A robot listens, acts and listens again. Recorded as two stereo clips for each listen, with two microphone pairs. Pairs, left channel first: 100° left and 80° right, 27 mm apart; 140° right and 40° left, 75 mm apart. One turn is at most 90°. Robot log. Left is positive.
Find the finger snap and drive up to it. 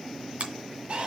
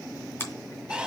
note: The finger snap: 85° right.
cmd yaw -85
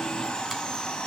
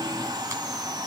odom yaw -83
cmd idle
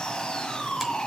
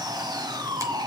cmd idle
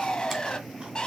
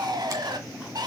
end: I heard a finger snap from this way, but can't make it out now. I did not reach it.